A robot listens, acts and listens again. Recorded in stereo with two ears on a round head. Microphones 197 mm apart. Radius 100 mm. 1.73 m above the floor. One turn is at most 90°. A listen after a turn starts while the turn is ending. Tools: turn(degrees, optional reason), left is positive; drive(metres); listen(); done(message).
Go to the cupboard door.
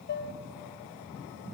listen()
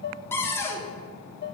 turn(degrees=30)
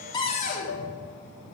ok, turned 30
turn(degrees=90, reason="So it is at 140° left.")
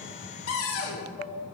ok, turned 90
turn(degrees=75, reason="The cupboard door is now 75° left.")
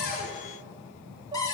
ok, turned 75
turn(degrees=15, reason="The cupboard door is now 15° left.")
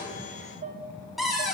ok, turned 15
drive(metres=1.0)
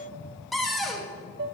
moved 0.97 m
drive(metres=1.0)
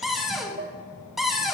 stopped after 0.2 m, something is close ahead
done("I am next to the cupboard door.")